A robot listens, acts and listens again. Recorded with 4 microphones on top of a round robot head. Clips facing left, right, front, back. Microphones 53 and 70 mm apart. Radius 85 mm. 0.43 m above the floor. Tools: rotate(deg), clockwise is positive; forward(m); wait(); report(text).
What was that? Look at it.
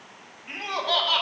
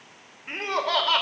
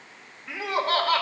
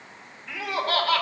rotate(55)
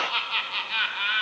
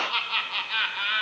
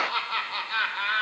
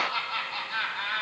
report("Found it: laughter, straight ahead, 1 to 2 m away.")